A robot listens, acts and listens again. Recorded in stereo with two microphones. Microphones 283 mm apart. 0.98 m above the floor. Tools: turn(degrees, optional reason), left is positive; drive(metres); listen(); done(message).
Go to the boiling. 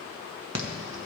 listen()
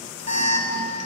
listen()
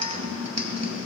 done("I can't make out boiling to turn to.")